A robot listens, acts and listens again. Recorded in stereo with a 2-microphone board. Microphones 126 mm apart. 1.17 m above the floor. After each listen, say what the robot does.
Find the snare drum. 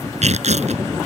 Keep listening.
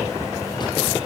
Keep listening.
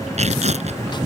I can't make out a snare drum to turn to.